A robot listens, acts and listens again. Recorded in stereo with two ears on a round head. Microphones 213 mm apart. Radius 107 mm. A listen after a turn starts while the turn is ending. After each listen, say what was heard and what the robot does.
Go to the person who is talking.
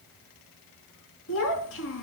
The child speaking: about 60° left or 120° left. Turn 60° left.
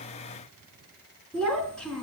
Drive 1.0 m forward.
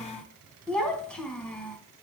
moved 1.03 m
Drive 1.0 m forward.
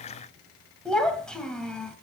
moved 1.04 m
Drive 1.0 m forward.
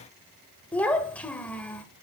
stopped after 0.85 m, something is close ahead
The child speaking is now 10° left. Turn 10° left.
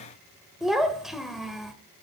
I am next to the child speaking.